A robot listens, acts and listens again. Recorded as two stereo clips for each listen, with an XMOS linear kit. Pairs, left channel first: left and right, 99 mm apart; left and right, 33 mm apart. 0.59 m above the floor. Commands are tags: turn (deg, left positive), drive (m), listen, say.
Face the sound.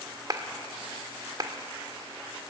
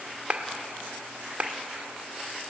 <turn deg="-40"/>
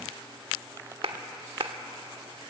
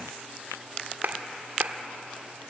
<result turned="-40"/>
<turn deg="-90"/>
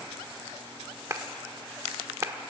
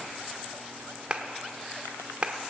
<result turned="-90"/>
<turn deg="-35"/>
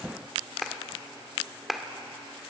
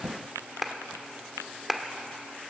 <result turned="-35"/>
<say>Facing the clap.</say>